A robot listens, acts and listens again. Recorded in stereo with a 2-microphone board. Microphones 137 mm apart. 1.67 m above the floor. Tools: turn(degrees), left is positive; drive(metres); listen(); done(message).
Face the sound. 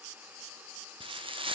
turn(degrees=-40)
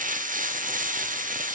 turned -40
turn(degrees=-100)
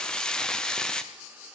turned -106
done("Facing the frying.")